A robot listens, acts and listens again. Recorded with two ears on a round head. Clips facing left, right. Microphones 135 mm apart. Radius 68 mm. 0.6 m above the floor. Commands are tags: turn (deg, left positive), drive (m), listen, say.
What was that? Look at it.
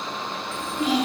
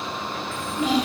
<turn deg="-70"/>
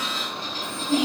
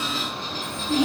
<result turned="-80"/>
<turn deg="15"/>
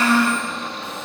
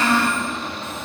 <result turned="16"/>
<say>Facing the child speaking.</say>